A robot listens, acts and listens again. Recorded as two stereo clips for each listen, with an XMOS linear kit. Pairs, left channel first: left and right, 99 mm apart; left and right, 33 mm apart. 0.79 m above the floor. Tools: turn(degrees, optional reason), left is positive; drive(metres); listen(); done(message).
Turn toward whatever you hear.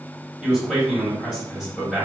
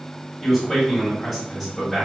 turn(degrees=30)
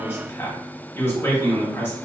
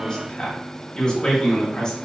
turn(degrees=145, reason="So it is at 145° left.")
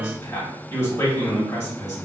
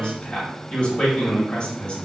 turn(degrees=25, reason="The man speaking is now 25° left.")
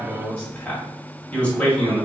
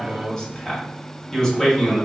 turn(degrees=10, reason="The man speaking is now 10° left.")
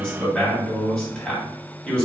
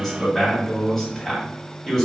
done("Found it: a man speaking, straight ahead.")